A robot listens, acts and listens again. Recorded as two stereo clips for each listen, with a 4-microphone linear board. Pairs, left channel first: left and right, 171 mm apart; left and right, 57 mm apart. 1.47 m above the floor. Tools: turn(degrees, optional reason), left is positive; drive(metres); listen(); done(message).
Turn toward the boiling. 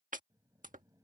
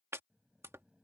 turn(degrees=-20, reason="The boiling: about 20° right or 160° right.")
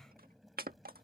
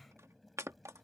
done("Facing the boiling.")